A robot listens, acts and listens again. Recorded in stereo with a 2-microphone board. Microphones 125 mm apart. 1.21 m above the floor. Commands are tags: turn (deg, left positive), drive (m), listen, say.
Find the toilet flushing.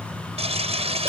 <turn deg="-55"/>
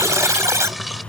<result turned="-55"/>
<listen/>
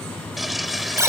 <say>Found it: a toilet flushing, straight ahead.</say>